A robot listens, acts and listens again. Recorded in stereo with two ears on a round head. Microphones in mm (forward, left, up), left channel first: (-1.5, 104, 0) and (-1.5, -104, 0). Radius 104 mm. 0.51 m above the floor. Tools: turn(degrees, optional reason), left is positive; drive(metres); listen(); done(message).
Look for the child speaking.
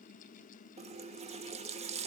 listen()
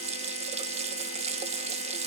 listen()
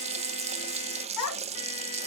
turn(degrees=90)
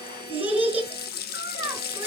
turn(degrees=-10, reason="So it is at 10° right.")
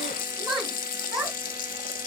done("Found it: a child speaking, straight ahead.")